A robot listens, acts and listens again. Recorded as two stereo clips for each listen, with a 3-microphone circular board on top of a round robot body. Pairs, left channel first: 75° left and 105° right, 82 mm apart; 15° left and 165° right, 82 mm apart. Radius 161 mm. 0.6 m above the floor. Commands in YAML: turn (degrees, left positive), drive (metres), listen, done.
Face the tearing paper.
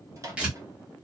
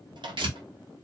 turn: 175
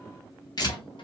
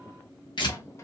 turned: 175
turn: 40
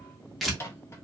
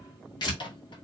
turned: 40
turn: -15
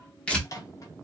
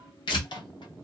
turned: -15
done: "Found it: tearing paper, straight ahead."